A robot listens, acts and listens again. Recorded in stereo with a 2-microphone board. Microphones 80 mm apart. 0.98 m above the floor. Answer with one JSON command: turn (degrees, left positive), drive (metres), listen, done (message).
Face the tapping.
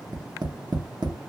{"turn": -65}
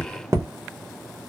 {"turn": -40}
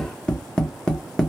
{"turn": 10}
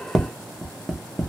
{"done": "Facing the tapping, under 1 m away."}